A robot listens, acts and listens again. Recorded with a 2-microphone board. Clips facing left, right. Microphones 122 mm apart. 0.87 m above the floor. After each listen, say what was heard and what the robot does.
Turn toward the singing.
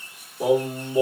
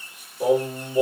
Turn 30° left.
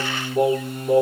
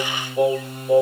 So it is at 135° left. Turn 135° left.
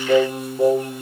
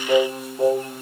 The singing is now 10° left. Turn 10° left.
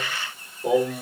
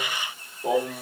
Found it: singing, straight ahead.